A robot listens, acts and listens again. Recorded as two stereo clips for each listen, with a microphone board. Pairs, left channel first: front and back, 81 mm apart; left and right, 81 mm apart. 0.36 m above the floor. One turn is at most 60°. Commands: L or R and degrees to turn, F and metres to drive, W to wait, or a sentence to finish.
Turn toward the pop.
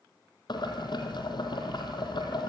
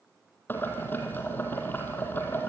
W
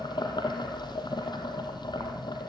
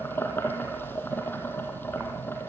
W
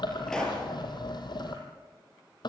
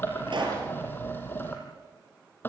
R60
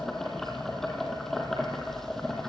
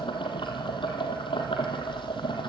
R20
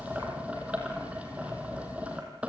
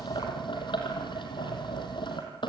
Facing where the pop came from. I can't hear it now.